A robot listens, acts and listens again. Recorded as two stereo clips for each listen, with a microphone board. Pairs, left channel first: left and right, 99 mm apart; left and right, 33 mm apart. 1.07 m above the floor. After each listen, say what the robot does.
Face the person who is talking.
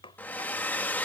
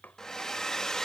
Keep listening.
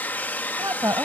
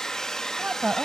Turn 40° right.
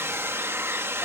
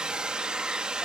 Keep listening.
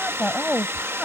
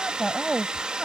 Facing the woman speaking.